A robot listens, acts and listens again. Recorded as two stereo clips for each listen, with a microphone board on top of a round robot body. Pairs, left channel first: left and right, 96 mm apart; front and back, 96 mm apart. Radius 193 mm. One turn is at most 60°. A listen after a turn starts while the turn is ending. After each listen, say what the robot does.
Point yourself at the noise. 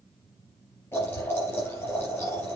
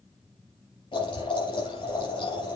Turn 25° left.
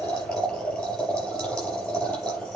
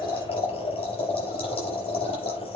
Found it: boiling, straight ahead, over 4 m away.